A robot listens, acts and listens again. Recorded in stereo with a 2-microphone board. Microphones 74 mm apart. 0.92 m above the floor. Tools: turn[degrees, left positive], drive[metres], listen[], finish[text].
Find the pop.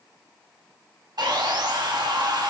Action: listen[]
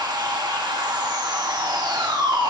Action: listen[]
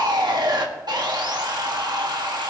Action: finish[I can't make out a pop, only sawing.]